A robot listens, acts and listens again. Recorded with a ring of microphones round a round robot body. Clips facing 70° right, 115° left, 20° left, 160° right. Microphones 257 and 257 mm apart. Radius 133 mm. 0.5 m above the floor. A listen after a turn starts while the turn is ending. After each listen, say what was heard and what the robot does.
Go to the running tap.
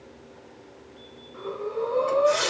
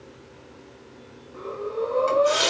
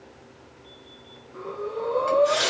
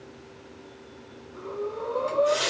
The running tap: 70° left. Turn 70° left.
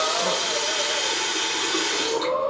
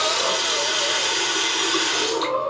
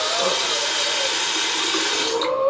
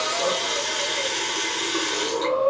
The running tap is now 35° left. Turn 35° left.
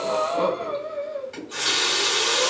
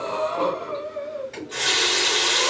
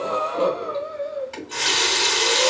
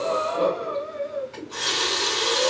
Drive 1.0 m forward.
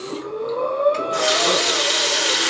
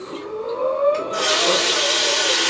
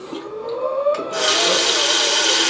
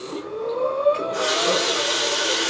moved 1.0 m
Drive 1.0 m forward.
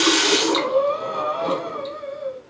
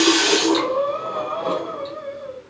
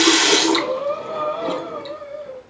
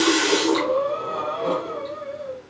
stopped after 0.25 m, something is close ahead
I am next to the running tap.